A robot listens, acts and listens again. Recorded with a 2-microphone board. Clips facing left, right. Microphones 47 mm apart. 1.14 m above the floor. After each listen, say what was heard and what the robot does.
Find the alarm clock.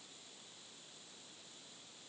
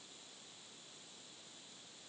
Keep listening.
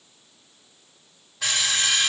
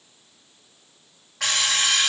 The alarm clock: about 70° right or 110° right. Turn 70° right.
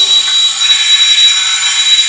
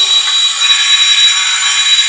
So it is at 25° right. Turn 25° right.
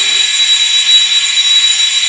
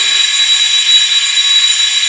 Found it: an alarm clock, straight ahead.